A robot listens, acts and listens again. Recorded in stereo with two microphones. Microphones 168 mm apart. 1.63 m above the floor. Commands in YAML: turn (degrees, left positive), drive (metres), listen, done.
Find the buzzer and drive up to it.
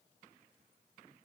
listen: true
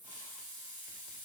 listen: true
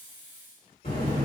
turn: 60
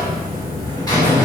turn: 30
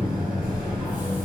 drive: 1.0
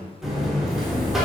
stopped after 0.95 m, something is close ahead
done: "I am next to the buzzer."